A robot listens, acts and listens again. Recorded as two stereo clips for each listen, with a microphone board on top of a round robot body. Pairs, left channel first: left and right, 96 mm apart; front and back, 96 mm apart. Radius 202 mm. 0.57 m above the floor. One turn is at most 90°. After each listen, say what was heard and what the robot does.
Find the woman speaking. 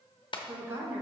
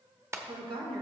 The woman speaking: 155° right. Turn 90° right.
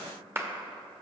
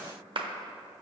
Nothing new. It was at 65° right. Turn 65° right.
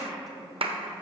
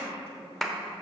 Found it: a woman speaking, straight ahead.